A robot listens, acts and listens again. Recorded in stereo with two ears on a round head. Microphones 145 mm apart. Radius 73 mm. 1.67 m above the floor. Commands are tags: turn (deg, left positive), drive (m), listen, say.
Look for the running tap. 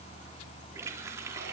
<turn deg="-15"/>
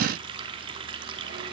<turn deg="-150"/>
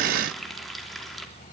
<say>Found it: a running tap, straight ahead, 2 to 4 m away.</say>